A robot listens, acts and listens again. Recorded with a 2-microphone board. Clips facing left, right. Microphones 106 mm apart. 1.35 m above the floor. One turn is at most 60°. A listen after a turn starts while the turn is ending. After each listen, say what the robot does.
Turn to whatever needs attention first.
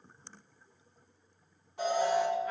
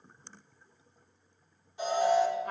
Turn 60° left.
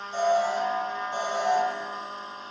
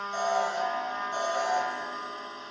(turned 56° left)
Turn 20° left.
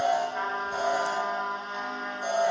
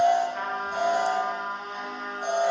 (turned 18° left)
Facing the alarm.